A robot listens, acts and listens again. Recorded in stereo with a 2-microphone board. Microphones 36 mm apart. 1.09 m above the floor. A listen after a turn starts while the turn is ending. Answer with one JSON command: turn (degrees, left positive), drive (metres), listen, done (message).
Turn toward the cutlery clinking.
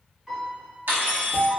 {"turn": -65}
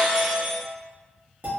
{"listen": true}
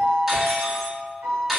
{"done": "Facing the cutlery clinking, 1 to 2 m away."}